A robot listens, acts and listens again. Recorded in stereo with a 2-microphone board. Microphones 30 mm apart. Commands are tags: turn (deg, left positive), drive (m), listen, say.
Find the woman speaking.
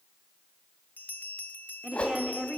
<turn deg="-25"/>
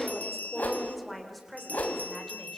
<say>Facing the woman speaking, over 4 m away.</say>